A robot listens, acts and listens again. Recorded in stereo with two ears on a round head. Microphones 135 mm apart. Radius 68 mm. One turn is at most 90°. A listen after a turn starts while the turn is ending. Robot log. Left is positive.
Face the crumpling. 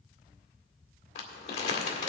note: The crumpling: about 40° left or 140° left.
cmd yaw +40
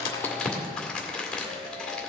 end: Facing the crumpling.